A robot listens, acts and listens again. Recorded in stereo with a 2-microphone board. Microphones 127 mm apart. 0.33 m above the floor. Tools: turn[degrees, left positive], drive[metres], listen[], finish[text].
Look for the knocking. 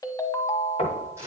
Thought: The knocking: about 60° left or 120° left.
Action: turn[60]
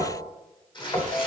Thought: So it is at 45° left.
Action: turn[45]
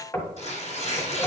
Thought: The knocking is now 20° left.
Action: turn[20]
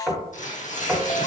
Action: finish[Found it: knocking, straight ahead, 1 to 2 m away.]